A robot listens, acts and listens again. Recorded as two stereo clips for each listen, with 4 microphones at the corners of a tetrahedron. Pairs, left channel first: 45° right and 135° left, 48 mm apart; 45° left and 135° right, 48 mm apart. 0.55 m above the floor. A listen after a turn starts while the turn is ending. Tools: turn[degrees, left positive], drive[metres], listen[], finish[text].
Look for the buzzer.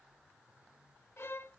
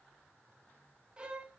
Action: listen[]
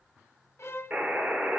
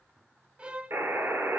Thought: The buzzer: 165° right.
Action: turn[-165]
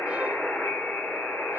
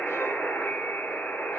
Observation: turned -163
Action: finish[Found it: a buzzer, straight ahead, 2 to 4 m away.]